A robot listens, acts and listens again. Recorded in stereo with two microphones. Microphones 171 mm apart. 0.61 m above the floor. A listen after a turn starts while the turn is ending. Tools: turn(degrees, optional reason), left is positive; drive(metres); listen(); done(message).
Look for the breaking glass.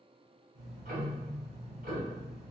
listen()
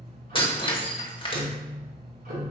turn(degrees=30, reason="The breaking glass: about 30° left or 150° left.")
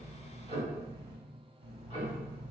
listen()
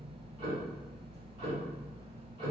done("I heard breaking glass, but can't make it out now. It was about straight ahead or 120° left.")